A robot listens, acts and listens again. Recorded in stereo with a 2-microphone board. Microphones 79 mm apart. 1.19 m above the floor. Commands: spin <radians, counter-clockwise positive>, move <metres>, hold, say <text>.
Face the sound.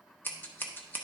spin 0.44
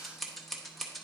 say Found it: scissors, straight ahead, under 1 m away.